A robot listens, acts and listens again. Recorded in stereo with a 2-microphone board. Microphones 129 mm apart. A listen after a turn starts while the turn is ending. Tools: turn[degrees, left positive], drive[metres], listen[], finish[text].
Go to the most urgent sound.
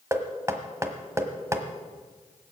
Action: listen[]
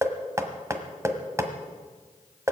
Action: listen[]
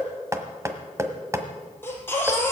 Thought: The baby crying: about 15° left or 165° left.
Action: turn[15]
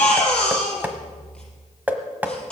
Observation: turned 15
Action: drive[1.0]
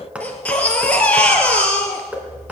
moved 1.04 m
Thought: The baby crying is now 10° left.
Action: turn[10]
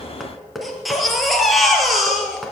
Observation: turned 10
Action: drive[1.0]
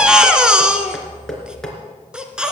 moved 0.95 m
Action: drive[1.0]
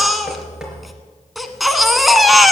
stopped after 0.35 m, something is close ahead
Action: finish[Arrived at the baby crying, straight ahead.]